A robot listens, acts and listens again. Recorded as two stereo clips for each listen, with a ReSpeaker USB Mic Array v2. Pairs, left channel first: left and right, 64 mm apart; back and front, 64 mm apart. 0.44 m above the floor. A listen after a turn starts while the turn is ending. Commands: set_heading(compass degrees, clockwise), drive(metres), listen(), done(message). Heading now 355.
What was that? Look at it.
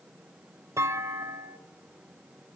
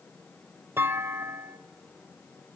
set_heading(45)
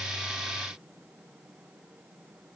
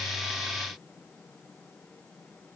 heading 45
done("Facing where the clunk came from. I can't hear it now.")